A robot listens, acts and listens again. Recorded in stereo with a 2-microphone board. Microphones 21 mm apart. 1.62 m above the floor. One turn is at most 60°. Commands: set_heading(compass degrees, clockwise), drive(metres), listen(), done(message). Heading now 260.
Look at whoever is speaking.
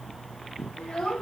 set_heading(205)
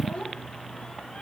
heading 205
set_heading(145)
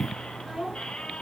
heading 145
set_heading(130)
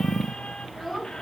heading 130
done("Facing the child speaking.")